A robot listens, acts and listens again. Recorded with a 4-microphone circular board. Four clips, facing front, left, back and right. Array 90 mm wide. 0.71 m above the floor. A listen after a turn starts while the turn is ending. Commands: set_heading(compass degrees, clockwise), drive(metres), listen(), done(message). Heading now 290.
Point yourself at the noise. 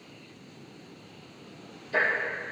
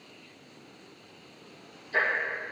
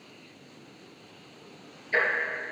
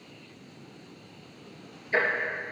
set_heading(55)
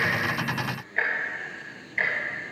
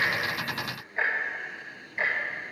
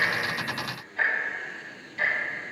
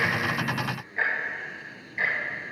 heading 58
done("Found it: ticking, straight ahead.")